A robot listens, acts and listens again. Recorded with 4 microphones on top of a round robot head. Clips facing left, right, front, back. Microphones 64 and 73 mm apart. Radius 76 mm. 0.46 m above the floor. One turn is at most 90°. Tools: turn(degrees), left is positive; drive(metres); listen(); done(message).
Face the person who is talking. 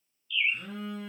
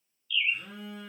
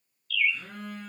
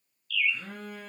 listen()
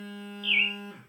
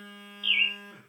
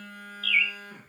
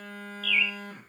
listen()
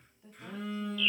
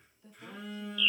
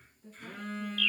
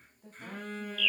turn(degrees=90)
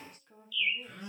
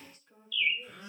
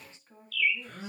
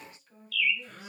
turn(degrees=60)
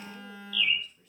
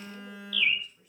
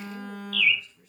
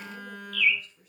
listen()
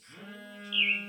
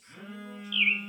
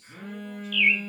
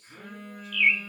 listen()
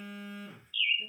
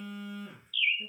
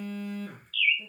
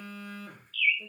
done("Facing where the woman speaking came from. I can't hear it now.")